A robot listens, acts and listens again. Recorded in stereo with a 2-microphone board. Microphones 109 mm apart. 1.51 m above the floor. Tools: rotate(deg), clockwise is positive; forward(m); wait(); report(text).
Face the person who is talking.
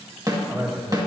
rotate(35)
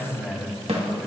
report("Found it: a man speaking, straight ahead.")